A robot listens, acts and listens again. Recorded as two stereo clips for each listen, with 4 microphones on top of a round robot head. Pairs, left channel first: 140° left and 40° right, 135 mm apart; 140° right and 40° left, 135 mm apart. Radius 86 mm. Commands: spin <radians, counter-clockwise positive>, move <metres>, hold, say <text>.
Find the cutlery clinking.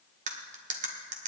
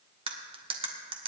spin -0.17
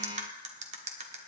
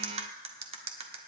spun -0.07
say Found it: cutlery clinking, straight ahead, 1 to 2 m away.